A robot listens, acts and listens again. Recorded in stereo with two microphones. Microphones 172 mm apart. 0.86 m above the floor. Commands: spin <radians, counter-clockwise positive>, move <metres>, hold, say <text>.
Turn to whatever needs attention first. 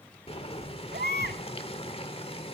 spin -1.57
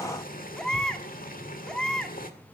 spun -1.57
say Facing the baby crying, 1 to 2 m away.